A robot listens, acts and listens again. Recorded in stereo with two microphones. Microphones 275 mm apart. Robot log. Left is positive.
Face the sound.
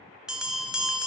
cmd yaw -30
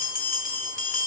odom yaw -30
note: So it is at 30° left.
cmd yaw +30
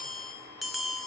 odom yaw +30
end: Found it: a bell, straight ahead.